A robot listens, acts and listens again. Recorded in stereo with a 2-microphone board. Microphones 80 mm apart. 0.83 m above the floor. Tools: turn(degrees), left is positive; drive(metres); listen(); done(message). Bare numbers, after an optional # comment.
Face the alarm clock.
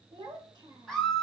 listen()
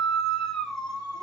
listen()
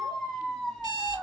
# The alarm clock: about 70° right or 110° right.
turn(-70)
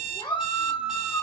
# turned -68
done("Facing the alarm clock, 2 to 4 m away.")